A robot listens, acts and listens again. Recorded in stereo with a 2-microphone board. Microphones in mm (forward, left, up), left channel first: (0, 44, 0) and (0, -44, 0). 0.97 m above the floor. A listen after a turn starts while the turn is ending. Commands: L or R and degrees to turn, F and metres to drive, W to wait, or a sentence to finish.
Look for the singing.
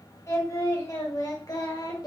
L55
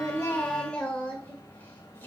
L20
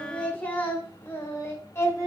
L35
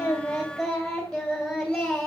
Facing the singing, 2 to 4 m away.